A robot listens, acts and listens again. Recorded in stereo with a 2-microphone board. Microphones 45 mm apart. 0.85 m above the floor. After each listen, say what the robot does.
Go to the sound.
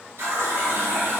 Turn 90° right.
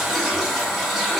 Turn 10° right.
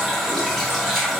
Drive 1.0 m forward.
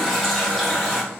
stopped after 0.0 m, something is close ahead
Something is in my way. I am facing the running tap but have not reached it.